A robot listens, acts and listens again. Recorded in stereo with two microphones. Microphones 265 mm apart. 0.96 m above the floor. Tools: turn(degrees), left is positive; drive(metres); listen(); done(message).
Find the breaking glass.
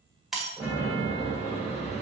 turn(degrees=30)
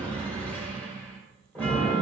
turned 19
listen()
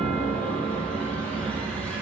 done("I heard breaking glass, but can't make it out now. It was about 20° right or 160° left.")